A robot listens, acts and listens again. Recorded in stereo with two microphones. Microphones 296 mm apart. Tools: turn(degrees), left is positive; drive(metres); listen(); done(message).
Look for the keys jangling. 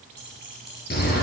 turn(degrees=-35)
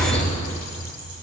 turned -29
listen()
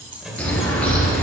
turn(degrees=-105)
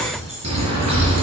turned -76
turn(degrees=-30)
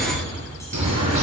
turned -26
listen()
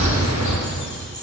done("Facing where the keys jangling came from. I can't hear it now.")